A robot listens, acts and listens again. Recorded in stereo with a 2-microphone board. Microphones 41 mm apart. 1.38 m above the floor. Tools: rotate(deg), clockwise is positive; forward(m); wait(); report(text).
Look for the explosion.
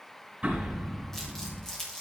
rotate(35)
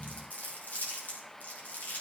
wait()
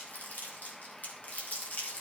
report("I heard an explosion, but can't make it out now. It was about straight ahead or 110° right.")